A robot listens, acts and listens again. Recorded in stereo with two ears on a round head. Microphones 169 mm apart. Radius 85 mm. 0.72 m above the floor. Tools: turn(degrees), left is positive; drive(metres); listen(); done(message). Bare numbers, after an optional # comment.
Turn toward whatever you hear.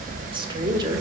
# The woman speaking: about 25° right or 155° right.
turn(-25)
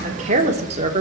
# The woman speaking: about 30° right or 150° right.
turn(-30)
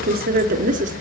# So it is at 140° right.
turn(-140)
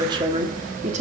# The woman speaking is now 40° right.
turn(-40)
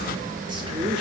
# The woman speaking is now 30° right.
turn(-30)
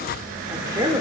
# The woman speaking is now 15° right.
turn(-15)
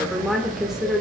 done("Found it: a woman speaking, straight ahead, 1 to 2 m away.")